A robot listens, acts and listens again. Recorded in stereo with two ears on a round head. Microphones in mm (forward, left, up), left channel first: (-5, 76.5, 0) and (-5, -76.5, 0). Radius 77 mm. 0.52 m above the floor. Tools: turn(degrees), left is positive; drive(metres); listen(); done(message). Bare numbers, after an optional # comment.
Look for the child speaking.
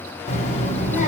# The child speaking: about 45° left or 135° left.
turn(45)
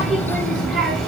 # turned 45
done("Found it: a child speaking, straight ahead.")